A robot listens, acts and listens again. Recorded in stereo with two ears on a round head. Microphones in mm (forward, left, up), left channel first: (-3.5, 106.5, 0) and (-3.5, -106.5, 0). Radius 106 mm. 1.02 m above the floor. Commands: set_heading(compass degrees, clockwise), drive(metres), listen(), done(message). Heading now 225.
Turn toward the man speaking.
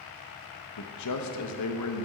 set_heading(135)
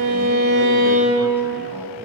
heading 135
listen()
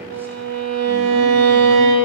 listen()
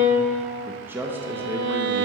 set_heading(145)
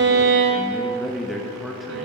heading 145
done("Facing the man speaking, under 1 m away.")